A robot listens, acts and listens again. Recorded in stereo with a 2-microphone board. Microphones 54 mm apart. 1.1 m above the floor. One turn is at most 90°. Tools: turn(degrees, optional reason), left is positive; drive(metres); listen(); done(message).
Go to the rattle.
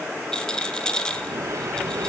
turn(degrees=15, reason="The rattle: about 15° left or 165° left.")
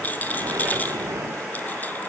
turn(degrees=90, reason="So it is at 145° left.")
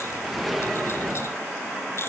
turn(degrees=55, reason="Nothing new. It was at 55° left.")
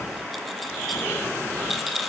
drive(metres=1.0)
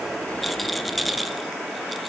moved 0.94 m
drive(metres=1.0)
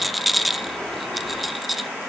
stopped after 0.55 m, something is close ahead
done("Arrived at the rattle, straight ahead.")